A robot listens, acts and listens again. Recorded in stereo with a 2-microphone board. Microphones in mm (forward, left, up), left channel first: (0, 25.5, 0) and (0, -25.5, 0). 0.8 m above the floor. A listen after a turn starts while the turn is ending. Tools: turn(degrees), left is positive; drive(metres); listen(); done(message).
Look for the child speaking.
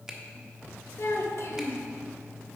turn(degrees=60)
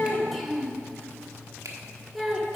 done("Found it: a child speaking, straight ahead, 1 to 2 m away.")